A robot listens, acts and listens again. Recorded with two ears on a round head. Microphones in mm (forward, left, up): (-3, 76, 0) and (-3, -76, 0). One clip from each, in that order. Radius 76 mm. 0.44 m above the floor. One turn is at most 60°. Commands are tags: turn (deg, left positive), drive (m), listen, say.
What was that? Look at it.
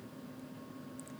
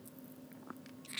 <listen/>
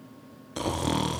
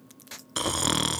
<turn deg="-50"/>
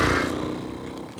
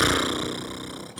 <turn deg="-60"/>
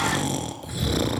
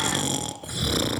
<turn deg="-25"/>
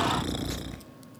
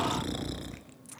<say>Facing the snoring.</say>